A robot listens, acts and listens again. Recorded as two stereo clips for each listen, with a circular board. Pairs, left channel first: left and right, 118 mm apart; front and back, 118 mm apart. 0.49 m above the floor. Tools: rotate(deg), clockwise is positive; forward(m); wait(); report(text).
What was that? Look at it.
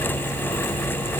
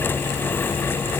wait()
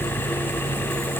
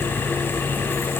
wait()
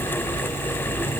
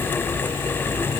report("I can't make out anything.")